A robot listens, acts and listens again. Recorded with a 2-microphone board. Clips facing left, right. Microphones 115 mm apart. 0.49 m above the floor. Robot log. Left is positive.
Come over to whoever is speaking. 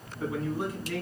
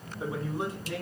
note: The man speaking: about 25° right or 155° right.
cmd yaw -25
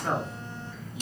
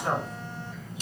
note: So it is at 125° right.
cmd yaw -125
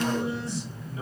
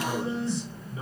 note: The man speaking is now 35° right.
cmd yaw -35
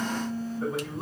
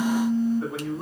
cmd fwd 1.0
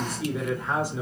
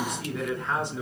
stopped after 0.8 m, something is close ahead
note: The man speaking is now 10° left.
cmd yaw +10
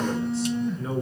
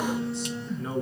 end: I am next to the man speaking.